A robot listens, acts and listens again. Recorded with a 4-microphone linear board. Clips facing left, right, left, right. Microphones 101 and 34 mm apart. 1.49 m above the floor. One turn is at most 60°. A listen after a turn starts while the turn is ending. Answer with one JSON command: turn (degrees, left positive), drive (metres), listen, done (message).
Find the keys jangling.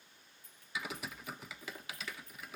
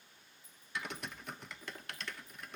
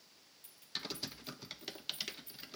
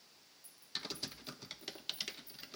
{"turn": 60}
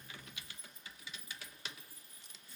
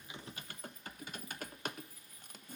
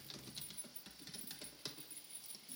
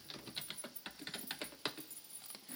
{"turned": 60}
{"turn": 30}
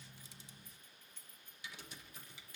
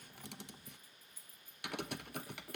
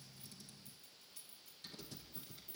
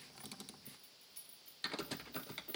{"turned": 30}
{"turn": -10}
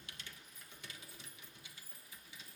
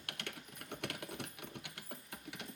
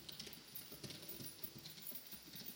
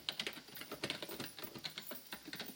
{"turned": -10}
{"done": "Facing the keys jangling."}